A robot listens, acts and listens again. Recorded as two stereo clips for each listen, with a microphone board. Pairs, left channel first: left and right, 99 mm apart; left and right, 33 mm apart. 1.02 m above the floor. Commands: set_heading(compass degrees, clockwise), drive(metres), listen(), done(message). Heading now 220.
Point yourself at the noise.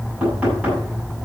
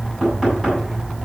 set_heading(250)
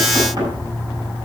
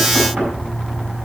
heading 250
set_heading(25)
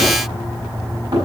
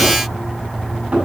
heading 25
set_heading(65)
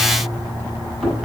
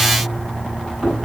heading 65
done("Facing the knocking, over 4 m away.")